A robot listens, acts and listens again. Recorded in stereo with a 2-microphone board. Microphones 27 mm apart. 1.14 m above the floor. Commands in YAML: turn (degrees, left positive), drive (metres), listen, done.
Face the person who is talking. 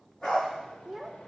turn: -30
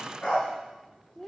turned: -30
turn: 20
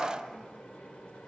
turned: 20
listen: true
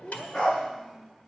done: "Found it: a child speaking, straight ahead."